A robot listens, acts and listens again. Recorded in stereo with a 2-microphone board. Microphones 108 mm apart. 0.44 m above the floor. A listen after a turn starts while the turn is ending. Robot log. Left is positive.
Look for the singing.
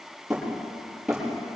cmd idle
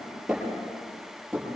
cmd idle
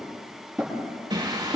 note: The singing: about 40° right or 140° right.
cmd yaw -40
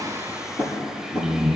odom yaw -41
end: Facing the singing.